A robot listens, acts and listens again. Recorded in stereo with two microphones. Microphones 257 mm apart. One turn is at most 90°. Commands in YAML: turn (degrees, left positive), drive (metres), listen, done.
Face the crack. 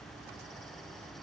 listen: true
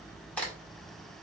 turn: 30
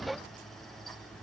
listen: true
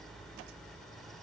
done: "I heard a crack, but can't make it out now. It was about 25° right or 145° left."